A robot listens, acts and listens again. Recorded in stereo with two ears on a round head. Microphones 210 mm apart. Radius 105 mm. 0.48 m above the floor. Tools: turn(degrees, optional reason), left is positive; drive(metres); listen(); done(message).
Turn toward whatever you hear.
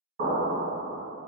turn(degrees=-45, reason="The explosion: about 45° right or 135° right.")
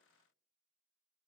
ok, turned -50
listen()
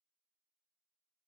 done("I heard an explosion, but can't make it out now. It was about 5° left or 85° right.")